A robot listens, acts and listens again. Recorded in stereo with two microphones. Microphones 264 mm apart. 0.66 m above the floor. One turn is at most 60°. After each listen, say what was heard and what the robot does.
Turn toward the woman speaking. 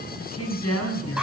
The woman speaking: about 60° left or 120° left. Turn 60° left.
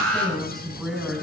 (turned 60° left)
Facing the woman speaking.